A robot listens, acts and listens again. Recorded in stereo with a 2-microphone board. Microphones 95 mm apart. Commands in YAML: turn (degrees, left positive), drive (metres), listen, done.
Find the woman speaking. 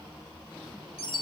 listen: true
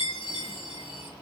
listen: true
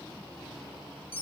done: "I can't make out a woman speaking, only a chime."